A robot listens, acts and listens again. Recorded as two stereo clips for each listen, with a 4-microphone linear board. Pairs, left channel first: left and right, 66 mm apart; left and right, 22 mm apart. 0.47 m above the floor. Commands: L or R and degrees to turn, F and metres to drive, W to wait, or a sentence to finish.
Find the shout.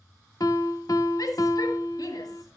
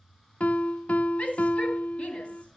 L70
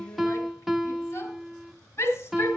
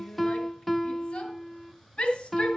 L40
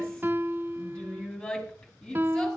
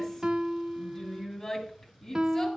L10
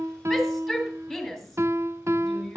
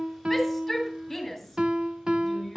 Found it: a shout, straight ahead, over 4 m away.